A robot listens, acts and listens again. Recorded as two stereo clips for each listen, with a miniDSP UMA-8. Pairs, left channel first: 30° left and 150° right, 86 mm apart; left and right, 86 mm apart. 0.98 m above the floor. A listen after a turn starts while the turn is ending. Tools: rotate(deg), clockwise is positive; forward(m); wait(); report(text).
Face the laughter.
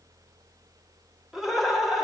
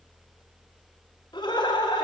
rotate(-125)
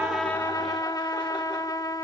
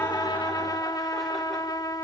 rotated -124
wait()
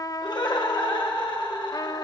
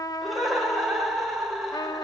report("Facing the laughter, over 4 m away.")